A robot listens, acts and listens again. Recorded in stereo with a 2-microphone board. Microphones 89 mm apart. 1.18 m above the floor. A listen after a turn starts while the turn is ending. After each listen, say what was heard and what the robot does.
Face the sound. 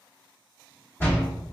The door slam: about 30° left or 150° left. Turn 30° left.
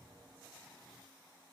Keep listening.
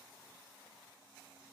I heard a door slam, but can't make it out now. It was about straight ahead or 120° left.